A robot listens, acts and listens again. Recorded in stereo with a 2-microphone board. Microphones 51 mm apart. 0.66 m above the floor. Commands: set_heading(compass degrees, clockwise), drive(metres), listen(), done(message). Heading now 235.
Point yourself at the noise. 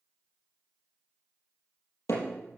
set_heading(145)
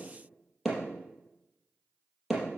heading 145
done("Found it: hammering, straight ahead, over 4 m away.")